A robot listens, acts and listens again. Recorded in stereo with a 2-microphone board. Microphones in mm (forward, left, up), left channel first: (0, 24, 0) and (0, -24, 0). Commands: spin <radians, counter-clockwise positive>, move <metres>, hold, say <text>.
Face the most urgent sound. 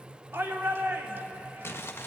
spin -1.05
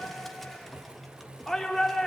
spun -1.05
say Facing the shout.